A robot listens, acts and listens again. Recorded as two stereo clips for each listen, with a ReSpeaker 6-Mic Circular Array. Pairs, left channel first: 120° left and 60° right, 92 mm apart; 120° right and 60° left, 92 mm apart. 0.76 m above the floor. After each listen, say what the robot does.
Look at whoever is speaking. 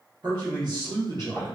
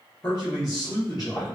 Turn 80° right.
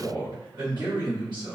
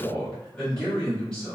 Turn 40° right.
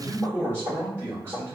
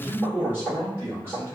Found it: a man speaking, straight ahead.